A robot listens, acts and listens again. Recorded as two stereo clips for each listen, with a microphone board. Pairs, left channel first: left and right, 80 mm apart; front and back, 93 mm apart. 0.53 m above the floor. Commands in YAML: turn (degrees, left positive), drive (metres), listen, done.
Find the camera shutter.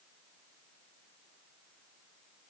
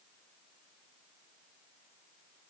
listen: true
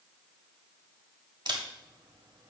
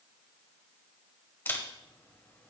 turn: -65
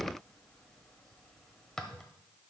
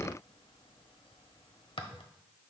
done: "Found it: a camera shutter, straight ahead."